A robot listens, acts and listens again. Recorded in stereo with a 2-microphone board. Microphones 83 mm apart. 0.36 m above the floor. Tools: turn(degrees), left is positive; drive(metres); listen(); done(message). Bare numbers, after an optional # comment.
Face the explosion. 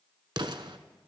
# The explosion: about 70° right or 110° right.
turn(-70)
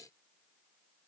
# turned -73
listen()
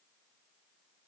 done("I heard an explosion, but can't make it out now. It was about straight ahead or 35° right.")